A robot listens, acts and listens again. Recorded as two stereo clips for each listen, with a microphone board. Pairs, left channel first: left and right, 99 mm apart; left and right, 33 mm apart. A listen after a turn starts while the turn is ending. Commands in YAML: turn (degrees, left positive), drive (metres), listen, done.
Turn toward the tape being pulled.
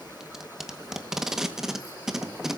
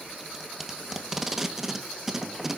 turn: -30
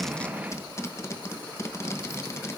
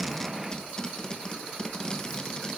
turn: 30
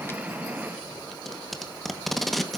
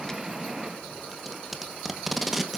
done: "Found it: tape being pulled, straight ahead, 1 to 2 m away."